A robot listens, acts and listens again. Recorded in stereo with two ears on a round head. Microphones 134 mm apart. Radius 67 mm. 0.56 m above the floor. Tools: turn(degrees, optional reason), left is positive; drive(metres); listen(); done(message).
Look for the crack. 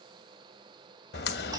turn(degrees=90)
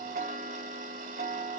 done("Facing where the crack came from. I can't hear it now.")